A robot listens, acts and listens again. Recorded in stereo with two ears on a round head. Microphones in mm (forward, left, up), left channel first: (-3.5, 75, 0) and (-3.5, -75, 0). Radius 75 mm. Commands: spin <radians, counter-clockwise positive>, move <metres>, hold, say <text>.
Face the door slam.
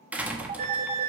spin -0.52
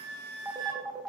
hold
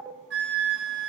say I heard a door slam, but can't make it out now. It was about 20° left or 140° right.